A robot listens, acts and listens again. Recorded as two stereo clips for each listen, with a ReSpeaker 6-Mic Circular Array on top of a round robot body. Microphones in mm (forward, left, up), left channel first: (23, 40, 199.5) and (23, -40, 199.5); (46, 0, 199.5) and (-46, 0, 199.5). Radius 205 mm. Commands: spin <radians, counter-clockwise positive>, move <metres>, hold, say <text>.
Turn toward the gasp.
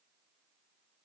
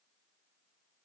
hold
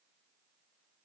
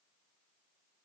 hold
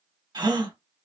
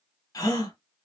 spin -0.87
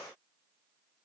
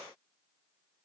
say I heard a gasp from this way, but can't make it out now.